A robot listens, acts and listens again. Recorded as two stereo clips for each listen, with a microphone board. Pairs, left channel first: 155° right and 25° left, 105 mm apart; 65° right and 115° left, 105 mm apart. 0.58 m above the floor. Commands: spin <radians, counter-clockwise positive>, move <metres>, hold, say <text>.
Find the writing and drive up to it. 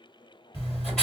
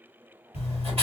spin 2.09
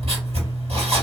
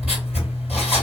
spin 0.61
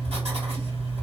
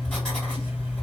spin 0.35
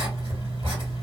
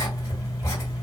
move 1.0
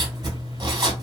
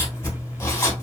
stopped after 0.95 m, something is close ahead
spin -0.17
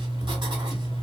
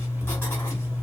say I am next to the writing.